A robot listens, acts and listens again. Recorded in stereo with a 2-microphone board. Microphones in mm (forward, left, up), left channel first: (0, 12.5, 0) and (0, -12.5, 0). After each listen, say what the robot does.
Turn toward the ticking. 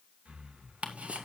Turn 60° right.
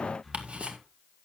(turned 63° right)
Turn 55° right.
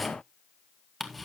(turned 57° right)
Facing the ticking, 1 to 2 m away.